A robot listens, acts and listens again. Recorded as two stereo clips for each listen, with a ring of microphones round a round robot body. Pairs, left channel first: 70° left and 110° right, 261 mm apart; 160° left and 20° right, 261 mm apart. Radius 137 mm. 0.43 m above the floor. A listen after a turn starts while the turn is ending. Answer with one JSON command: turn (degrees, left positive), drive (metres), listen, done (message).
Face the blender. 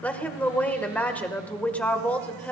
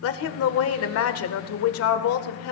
{"listen": true}
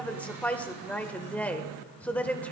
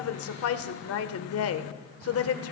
{"listen": true}
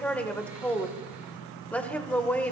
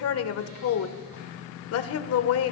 {"done": "I can't make out a blender to turn to."}